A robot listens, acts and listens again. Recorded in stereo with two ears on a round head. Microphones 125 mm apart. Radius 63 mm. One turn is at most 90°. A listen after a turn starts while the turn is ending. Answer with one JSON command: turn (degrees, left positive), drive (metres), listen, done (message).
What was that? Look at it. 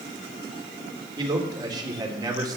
{"turn": -30}
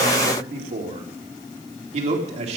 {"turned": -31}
{"turn": -90}
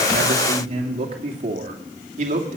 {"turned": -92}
{"turn": -50}
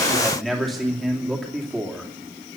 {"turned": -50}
{"done": "Facing the man speaking, 2 to 4 m away."}